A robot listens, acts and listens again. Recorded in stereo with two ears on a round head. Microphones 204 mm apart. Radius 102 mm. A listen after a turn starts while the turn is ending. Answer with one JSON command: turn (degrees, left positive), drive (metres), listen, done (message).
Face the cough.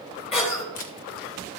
{"turn": 30}
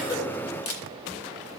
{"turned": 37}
{"listen": true}
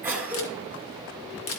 {"turn": -10}
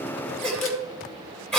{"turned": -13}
{"done": "Found it: a cough, straight ahead."}